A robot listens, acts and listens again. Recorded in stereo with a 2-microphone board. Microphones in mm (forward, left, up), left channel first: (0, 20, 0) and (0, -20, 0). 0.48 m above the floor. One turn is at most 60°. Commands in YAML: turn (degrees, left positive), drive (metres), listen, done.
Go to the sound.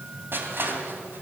turn: -60
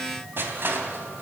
turn: -60
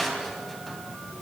drive: 1.0
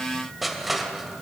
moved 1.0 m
drive: 1.0
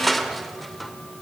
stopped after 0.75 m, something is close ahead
done: "Arrived at the crushing, straight ahead."